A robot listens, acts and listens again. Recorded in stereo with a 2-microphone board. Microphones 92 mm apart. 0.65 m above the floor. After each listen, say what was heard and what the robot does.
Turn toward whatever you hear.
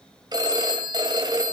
The phone ringing: about 50° right or 130° right. Turn 50° right.
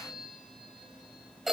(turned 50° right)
Found it: a phone ringing, straight ahead, 2 to 4 m away.